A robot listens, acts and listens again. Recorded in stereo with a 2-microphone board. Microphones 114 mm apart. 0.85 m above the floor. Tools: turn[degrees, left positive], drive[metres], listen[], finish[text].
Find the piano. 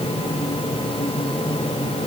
Action: listen[]
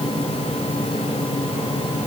Action: listen[]
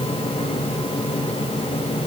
Action: finish[I can't make out a piano to turn to.]